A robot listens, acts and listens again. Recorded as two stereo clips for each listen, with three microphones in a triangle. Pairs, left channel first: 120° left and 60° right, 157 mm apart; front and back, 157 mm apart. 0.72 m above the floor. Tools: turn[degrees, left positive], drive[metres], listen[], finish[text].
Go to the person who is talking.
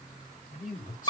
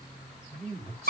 Thought: The man speaking: 140° left.
Action: turn[140]
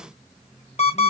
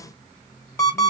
Action: listen[]
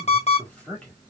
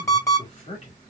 Thought: The man speaking is now 40° left.
Action: turn[40]
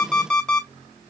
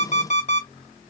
Action: listen[]
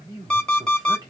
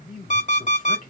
Action: drive[1.0]
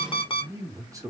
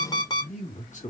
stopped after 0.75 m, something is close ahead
Action: finish[I am next to the man speaking.]